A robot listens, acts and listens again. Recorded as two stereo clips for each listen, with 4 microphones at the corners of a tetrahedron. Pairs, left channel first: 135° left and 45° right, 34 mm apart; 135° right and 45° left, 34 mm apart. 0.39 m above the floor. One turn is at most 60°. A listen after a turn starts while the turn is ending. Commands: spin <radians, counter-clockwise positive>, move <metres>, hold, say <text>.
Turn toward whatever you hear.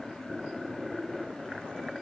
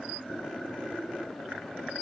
hold
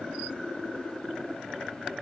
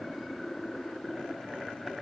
hold
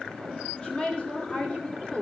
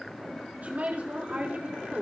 spin 1.05
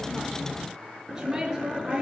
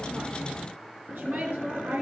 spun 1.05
spin 0.61
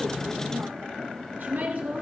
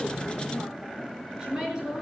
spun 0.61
spin -0.44
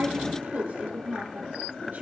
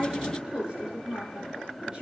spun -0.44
spin -0.35
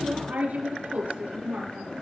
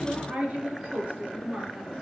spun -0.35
say Facing the woman speaking.